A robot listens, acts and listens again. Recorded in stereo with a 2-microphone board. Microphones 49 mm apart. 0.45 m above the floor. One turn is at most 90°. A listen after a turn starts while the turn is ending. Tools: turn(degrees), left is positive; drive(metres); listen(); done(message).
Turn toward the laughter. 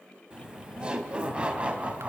turn(degrees=-25)
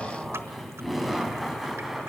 done("Facing the laughter.")